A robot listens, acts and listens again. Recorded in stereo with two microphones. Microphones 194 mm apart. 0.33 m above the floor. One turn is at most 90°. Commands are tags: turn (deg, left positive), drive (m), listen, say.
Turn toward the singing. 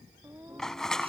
<turn deg="-30"/>
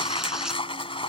<listen/>
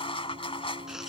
<turn deg="-90"/>
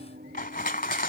<turn deg="-50"/>
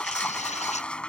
<listen/>
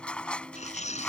<listen/>
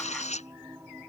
<turn deg="-10"/>
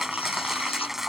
<listen/>
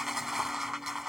<listen/>
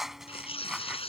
<say>I heard singing from this way, but can't make it out now.</say>